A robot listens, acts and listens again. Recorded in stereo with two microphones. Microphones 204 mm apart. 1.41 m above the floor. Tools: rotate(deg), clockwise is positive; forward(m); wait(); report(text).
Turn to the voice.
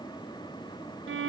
wait()
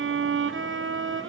wait()
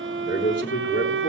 rotate(-60)
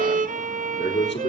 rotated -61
rotate(-60)
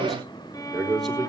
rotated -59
report("Found it: a man speaking, straight ahead.")